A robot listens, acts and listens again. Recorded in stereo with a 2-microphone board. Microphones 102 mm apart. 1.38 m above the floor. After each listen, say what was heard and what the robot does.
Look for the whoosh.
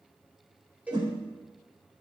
The whoosh: about 50° right or 130° right. Turn 50° right.
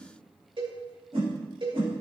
So it is at 80° right. Turn 80° right.
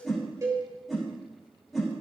Facing the whoosh.